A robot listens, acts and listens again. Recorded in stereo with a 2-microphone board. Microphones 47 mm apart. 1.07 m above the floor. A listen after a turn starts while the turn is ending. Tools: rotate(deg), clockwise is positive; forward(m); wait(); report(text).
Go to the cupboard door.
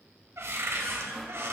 rotate(90)
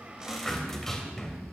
rotate(-10)
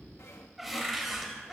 forward(1.0)
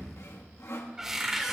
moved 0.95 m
rotate(10)
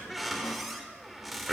forward(1.0)
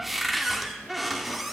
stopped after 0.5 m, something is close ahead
report("I am next to the cupboard door.")